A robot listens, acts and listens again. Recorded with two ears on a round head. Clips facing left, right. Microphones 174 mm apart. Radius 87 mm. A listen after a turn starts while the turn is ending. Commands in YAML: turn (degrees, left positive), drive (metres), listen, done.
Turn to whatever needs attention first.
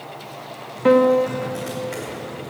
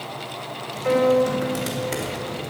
listen: true
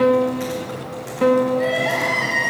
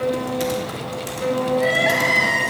turn: -30
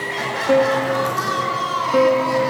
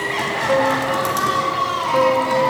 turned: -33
turn: 20
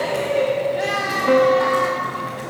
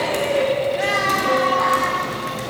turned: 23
done: "Facing the crying, over 4 m away."